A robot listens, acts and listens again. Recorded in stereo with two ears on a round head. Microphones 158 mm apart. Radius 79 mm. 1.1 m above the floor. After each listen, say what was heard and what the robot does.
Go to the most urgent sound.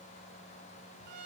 Keep listening.
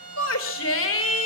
Turn 90° left.
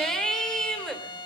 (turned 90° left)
Drive 1.0 m forward.
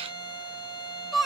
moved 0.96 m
Drive 1.0 m forward.
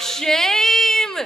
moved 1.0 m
Drive 1.0 m forward.
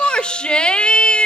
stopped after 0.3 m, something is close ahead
Arrived at the shout, straight ahead.